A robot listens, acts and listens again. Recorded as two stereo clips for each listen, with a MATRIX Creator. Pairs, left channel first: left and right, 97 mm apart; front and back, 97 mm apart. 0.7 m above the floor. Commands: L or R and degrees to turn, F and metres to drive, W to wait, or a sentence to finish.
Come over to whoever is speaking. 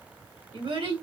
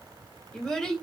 R80
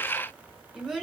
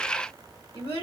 F1.0
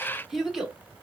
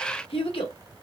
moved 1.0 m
F1.0
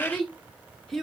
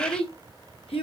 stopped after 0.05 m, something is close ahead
Arrived at the child speaking, straight ahead.